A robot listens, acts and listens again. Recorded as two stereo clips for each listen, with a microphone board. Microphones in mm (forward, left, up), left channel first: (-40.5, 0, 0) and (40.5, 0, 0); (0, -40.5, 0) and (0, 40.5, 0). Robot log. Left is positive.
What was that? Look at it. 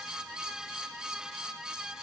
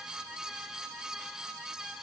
cmd idle
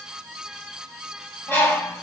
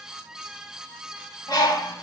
note: The bird: 115° right.
cmd yaw -115
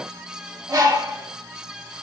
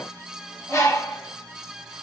note: The bird is now 40° right.
cmd yaw -40
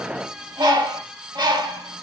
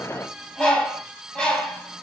note: The bird is now 10° right.
cmd yaw -10
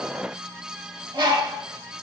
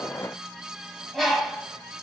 end: Found it: a bird, straight ahead.